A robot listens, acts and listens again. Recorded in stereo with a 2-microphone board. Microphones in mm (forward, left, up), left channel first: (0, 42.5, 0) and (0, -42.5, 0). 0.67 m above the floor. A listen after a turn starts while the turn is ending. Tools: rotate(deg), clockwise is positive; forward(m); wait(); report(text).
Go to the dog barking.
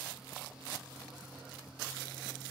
wait()
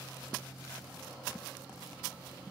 wait()
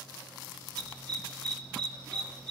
rotate(-30)
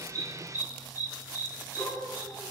rotate(-135)
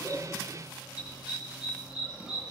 rotate(10)
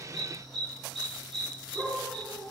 forward(1.0)
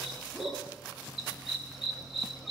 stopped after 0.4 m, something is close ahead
report("Blocked. The dog barking is further on, straight ahead.")